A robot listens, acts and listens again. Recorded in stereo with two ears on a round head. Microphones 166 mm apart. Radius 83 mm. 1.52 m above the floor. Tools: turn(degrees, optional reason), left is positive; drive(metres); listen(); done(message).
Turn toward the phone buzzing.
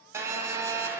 turn(degrees=-30)
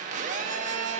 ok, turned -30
turn(degrees=-135, reason="So it is at 135° right.")
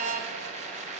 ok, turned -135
turn(degrees=-40, reason="The phone buzzing is now 40° right.")
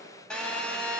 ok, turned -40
done("Facing the phone buzzing.")